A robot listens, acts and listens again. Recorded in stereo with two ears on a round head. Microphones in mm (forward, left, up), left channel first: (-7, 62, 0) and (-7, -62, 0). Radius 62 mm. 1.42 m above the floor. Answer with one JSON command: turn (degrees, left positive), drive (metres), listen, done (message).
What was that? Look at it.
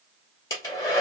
{"turn": 25}
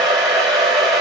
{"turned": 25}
{"done": "Found it: a hair dryer, straight ahead."}